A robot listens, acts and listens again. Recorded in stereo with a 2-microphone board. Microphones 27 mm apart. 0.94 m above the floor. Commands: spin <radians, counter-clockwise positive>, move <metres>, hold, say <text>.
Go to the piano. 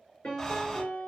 spin 1.22
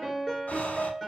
move 1.0
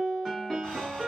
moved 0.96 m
move 1.0
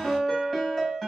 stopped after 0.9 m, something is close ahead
say I am next to the piano.